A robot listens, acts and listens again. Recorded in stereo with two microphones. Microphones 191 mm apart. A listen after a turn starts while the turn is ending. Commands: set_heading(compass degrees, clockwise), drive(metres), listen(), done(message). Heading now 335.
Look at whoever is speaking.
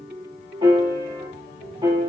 listen()
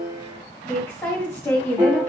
set_heading(305)
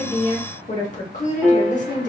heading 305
set_heading(165)
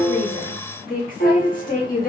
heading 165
set_heading(120)
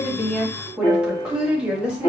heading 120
done("Facing the woman speaking, 1 to 2 m away.")